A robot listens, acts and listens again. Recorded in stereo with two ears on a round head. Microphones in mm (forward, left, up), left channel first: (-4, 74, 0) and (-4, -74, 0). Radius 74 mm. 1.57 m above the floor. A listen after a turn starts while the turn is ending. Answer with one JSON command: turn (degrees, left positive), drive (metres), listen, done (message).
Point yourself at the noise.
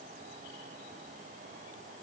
{"listen": true}
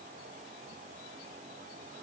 {"listen": true}
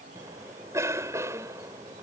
{"turn": -20}
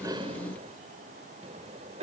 {"turn": -140}
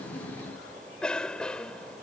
{"done": "Facing the cough."}